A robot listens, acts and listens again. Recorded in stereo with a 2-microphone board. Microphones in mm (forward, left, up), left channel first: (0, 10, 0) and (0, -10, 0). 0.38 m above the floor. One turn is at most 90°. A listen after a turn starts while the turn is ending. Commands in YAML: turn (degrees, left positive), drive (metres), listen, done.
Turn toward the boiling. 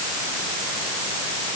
listen: true
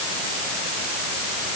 listen: true
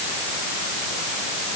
done: "I can't make out boiling."